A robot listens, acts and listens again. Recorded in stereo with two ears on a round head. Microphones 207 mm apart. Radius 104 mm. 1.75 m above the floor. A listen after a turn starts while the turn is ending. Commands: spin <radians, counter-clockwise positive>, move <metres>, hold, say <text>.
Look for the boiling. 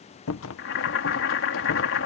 spin 0.96
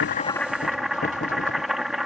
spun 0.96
say Found it: boiling, straight ahead.